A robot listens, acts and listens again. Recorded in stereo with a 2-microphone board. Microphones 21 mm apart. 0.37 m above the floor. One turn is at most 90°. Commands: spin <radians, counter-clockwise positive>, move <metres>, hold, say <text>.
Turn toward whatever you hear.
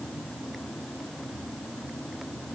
hold
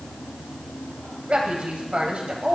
spin -1.05
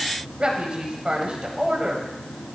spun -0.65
spin -1.05
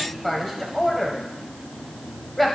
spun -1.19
say Facing the woman speaking.